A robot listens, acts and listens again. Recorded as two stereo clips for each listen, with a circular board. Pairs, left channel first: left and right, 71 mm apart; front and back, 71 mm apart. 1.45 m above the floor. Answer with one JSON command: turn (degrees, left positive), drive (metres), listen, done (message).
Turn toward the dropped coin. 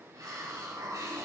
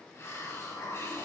{"listen": true}
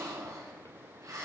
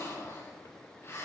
{"listen": true}
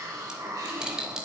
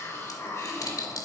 {"turn": -10}
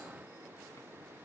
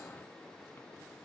{"done": "I heard a dropped coin from this way, but can't make it out now."}